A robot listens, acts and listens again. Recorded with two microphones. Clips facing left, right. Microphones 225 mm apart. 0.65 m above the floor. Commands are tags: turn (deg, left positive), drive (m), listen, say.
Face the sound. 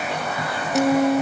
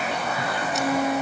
<turn deg="55"/>
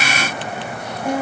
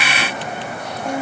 <say>Found it: a guitar, straight ahead.</say>